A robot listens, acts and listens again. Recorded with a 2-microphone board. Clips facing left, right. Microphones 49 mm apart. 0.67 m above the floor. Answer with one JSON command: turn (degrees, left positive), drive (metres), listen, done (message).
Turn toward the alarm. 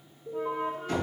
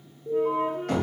{"turn": -30}
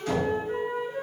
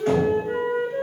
{"listen": true}
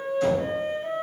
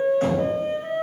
{"listen": true}
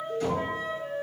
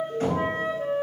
{"turn": 20}
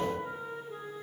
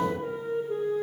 {"listen": true}
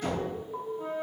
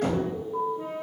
{"done": "Found it: an alarm, straight ahead."}